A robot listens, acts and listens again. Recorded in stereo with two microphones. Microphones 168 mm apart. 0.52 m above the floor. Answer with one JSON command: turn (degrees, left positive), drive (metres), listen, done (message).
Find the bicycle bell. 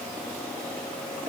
{"listen": true}
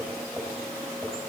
{"listen": true}
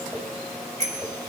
{"turn": -45}
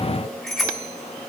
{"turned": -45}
{"done": "Facing the bicycle bell, 2 to 4 m away."}